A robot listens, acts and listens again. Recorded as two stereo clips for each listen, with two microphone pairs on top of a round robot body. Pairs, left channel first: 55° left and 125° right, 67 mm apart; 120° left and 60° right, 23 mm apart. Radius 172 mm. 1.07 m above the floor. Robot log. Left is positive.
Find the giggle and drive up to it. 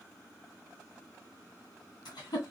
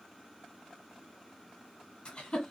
note: The giggle: 75° left.
cmd yaw +75
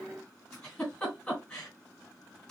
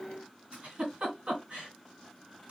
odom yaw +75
note: The giggle is now 25° right.
cmd yaw -25
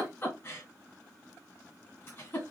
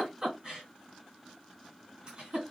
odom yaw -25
cmd fwd 1.0
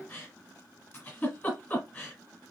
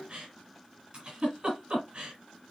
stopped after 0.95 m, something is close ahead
note: The giggle is now 10° right.
cmd yaw -10
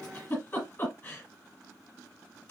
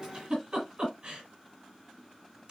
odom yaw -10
end: Arrived at the giggle, straight ahead.